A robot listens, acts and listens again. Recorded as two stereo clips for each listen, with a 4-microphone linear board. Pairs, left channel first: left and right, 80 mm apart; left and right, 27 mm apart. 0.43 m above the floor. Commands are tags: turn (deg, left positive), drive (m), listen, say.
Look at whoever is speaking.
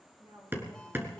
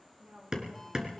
<turn deg="-90"/>
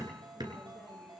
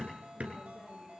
<listen/>
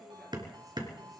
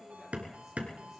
<listen/>
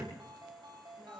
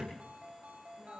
<say>I heard a woman speaking from this way, but can't make it out now.</say>